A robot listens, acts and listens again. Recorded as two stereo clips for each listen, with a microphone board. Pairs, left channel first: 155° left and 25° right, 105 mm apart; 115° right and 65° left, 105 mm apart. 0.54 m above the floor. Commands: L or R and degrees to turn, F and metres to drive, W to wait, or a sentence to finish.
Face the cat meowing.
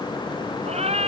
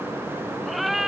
R20
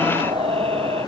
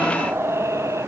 Facing the cat meowing.